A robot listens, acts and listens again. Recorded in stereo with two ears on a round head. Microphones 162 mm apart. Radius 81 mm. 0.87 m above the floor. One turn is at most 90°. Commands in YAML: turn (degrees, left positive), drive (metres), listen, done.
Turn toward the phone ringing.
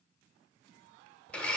listen: true
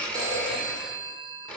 turn: -20
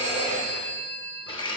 turn: -90
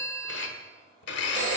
turn: -65
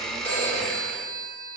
turn: 10
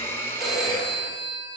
done: "Found it: a phone ringing, straight ahead, 1 to 2 m away."